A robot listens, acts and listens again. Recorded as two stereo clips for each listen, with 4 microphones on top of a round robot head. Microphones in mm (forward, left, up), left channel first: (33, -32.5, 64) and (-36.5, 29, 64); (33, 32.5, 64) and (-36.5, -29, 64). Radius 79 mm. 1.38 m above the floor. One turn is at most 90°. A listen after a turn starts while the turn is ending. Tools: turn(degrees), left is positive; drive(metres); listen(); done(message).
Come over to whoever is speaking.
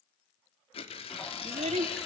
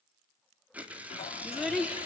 turn(degrees=90)
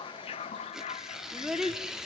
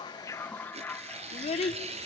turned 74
turn(degrees=55)
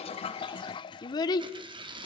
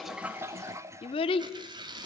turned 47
turn(degrees=10)
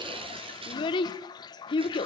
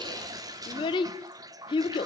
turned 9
drive(metres=1.0)
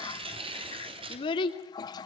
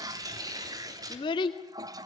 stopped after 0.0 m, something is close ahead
done("Blocked. The child speaking is further on, straight ahead.")